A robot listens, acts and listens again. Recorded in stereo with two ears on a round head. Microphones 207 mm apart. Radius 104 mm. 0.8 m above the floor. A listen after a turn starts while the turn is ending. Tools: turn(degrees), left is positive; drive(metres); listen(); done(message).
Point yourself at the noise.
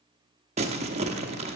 turn(degrees=-30)
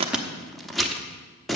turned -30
done("Facing the crumpling, under 1 m away.")